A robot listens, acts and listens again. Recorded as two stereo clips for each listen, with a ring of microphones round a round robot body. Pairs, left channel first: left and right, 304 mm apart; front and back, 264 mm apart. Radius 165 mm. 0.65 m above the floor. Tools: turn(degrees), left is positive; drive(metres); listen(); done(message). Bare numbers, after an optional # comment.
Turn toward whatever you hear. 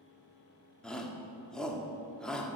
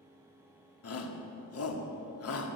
done("Found it: a shout, straight ahead, 1 to 2 m away.")